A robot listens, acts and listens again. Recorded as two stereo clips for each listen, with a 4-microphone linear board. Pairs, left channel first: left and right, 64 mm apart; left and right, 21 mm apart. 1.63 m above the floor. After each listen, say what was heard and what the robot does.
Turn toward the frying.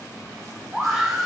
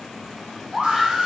Keep listening.
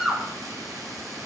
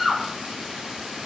Keep listening.
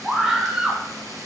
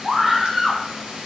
I can't make out frying to turn to.